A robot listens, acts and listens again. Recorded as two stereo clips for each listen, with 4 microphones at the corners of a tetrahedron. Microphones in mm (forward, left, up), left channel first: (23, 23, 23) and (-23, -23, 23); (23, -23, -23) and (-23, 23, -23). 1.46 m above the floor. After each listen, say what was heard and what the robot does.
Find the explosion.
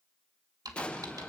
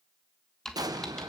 The explosion: 115° left. Turn 115° left.
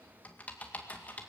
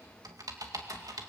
I heard an explosion from this way, but can't make it out now.